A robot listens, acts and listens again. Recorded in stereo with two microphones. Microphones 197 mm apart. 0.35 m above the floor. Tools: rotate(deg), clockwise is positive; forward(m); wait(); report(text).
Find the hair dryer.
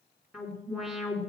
wait()
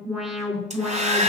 rotate(35)
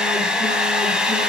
report("Facing the hair dryer, 2 to 4 m away.")